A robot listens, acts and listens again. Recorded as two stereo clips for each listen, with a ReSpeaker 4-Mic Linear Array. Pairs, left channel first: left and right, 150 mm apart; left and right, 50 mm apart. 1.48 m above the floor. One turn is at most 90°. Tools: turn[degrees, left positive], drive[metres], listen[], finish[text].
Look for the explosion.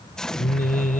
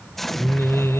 Action: turn[30]
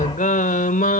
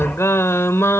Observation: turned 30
Action: listen[]
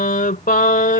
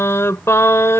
Action: finish[I heard an explosion, but can't make it out now. It was about 25° right or 145° left.]